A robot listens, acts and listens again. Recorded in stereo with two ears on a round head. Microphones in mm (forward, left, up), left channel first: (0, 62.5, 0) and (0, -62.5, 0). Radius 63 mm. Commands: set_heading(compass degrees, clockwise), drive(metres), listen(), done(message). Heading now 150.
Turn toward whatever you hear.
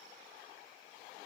listen()
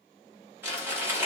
set_heading(165)
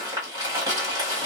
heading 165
set_heading(315)
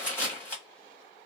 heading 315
set_heading(300)
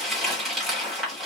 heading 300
done("Facing the crumpling.")